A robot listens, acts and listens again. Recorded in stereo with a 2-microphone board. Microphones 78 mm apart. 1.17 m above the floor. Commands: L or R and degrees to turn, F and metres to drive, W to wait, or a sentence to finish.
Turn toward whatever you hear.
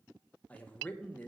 L15
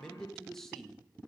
Facing the man speaking.